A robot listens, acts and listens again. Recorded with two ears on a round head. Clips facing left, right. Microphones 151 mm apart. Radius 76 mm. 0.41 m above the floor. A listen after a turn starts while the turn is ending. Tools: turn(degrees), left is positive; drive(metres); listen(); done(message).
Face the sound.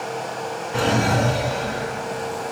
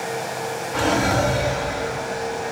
turn(degrees=35)
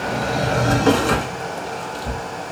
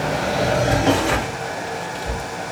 turn(degrees=110)
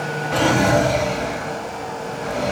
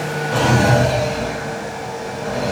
turn(degrees=-15)
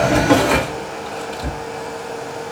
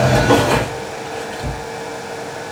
done("Found it: a drawer, straight ahead, 2 to 4 m away.")